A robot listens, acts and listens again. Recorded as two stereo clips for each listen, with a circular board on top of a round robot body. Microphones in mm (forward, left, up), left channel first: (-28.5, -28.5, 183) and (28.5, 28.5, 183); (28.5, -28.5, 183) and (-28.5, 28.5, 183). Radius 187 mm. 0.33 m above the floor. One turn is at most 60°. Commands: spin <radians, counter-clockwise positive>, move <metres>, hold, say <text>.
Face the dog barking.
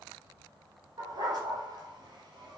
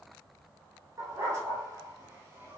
spin 1.05
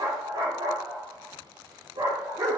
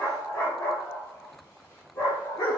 say Found it: a dog barking, straight ahead.